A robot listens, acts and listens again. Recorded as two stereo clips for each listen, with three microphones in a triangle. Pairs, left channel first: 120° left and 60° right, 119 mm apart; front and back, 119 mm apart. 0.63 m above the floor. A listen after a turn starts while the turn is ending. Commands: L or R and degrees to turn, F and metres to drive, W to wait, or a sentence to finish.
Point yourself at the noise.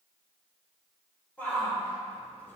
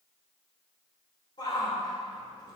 L45
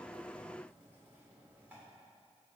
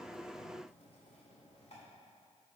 W
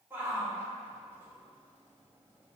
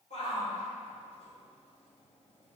L10
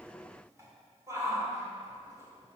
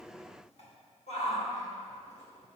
Facing the shout, 2 to 4 m away.